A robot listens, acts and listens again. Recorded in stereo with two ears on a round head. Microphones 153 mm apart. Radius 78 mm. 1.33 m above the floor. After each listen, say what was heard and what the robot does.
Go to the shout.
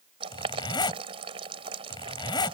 Keep listening.
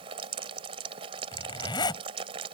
Keep listening.
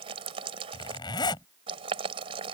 I can't make out a shout to turn to.